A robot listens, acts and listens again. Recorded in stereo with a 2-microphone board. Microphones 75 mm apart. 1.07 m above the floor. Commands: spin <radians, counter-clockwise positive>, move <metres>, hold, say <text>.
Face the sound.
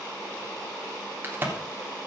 spin -0.44
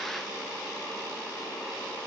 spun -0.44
hold
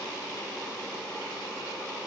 say I heard a crack, but can't make it out now. It was about straight ahead or 130° right.